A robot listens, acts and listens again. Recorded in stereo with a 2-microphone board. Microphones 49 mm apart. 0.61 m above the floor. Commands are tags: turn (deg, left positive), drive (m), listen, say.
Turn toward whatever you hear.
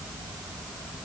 <listen/>
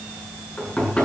<turn deg="25"/>
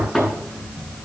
<say>Facing the knocking.</say>